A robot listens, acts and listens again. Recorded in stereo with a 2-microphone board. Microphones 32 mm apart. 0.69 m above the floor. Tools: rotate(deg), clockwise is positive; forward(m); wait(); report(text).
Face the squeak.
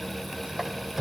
rotate(30)
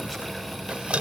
rotate(145)
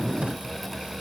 wait()
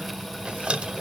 rotate(35)
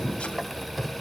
report("Found it: a squeak, straight ahead, 1 to 2 m away.")